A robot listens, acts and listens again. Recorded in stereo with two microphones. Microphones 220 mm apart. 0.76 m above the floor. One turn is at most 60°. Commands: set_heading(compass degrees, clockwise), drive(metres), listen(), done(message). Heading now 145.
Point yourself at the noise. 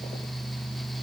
listen()
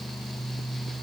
listen()
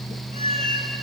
set_heading(175)
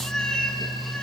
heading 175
done("Found it: a cat meowing, straight ahead, 2 to 4 m away.")